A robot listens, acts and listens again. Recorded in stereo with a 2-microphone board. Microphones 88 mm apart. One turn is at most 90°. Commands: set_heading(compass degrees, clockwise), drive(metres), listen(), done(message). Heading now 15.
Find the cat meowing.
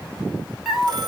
set_heading(45)
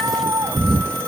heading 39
set_heading(129)
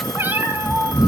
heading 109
set_heading(124)
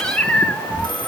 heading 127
set_heading(112)
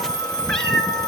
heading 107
done("Facing the cat meowing, 2 to 4 m away.")